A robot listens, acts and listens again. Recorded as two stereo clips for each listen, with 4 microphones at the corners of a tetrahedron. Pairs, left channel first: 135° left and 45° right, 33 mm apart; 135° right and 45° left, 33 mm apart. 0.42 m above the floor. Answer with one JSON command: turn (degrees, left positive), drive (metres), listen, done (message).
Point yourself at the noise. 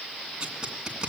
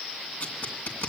{"turn": -105}
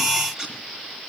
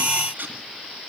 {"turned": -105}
{"turn": 25}
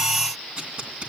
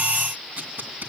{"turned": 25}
{"turn": 10}
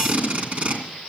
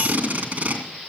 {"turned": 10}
{"done": "Found it: tape being pulled, straight ahead."}